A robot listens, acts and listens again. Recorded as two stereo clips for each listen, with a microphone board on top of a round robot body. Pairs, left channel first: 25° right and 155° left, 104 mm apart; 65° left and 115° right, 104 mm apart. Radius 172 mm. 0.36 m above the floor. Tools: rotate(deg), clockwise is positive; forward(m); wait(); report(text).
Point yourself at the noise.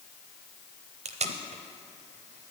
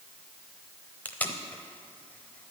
rotate(-145)
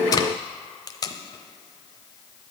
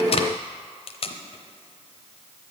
rotate(-35)
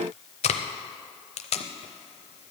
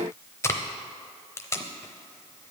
report("Facing the tape being pulled, under 1 m away.")